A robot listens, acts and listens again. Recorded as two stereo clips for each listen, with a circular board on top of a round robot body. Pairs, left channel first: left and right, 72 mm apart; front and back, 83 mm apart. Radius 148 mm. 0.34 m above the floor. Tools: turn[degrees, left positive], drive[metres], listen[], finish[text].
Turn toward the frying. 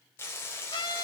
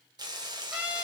Thought: The frying: 145° left.
Action: turn[145]
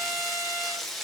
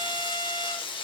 Action: finish[Found it: frying, straight ahead, 1 to 2 m away.]